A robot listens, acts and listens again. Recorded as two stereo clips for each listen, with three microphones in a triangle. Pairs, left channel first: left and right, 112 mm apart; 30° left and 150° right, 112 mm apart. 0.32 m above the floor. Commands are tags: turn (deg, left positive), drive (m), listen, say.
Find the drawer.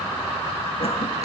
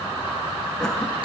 <listen/>
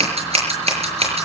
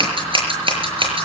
<listen/>
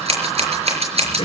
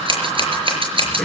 <say>I can't make out a drawer, only scissors.</say>